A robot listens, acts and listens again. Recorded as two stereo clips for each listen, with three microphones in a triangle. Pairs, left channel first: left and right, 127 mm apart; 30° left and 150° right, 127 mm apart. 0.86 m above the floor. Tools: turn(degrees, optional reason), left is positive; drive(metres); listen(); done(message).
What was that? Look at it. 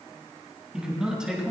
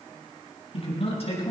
done("Found it: a man speaking, straight ahead.")